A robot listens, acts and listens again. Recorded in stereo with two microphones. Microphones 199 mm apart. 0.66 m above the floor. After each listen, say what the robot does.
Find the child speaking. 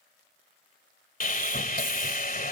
Keep listening.
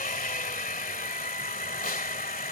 Keep listening.
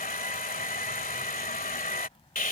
Turn 30° left.
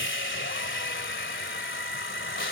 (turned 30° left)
Keep listening.
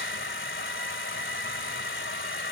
Keep listening.
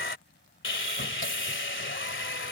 Turn 120° left.
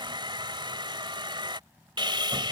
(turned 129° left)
Turn 10° right.
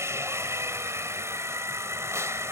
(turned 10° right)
Keep listening.
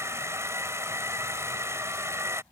Facing the child speaking.